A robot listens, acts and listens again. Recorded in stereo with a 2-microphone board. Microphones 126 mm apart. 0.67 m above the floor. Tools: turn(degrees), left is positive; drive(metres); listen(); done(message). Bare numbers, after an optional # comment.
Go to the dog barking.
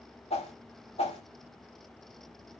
listen()
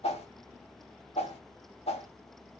listen()
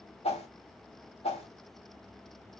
done("I can't make out a dog barking, only a whoosh.")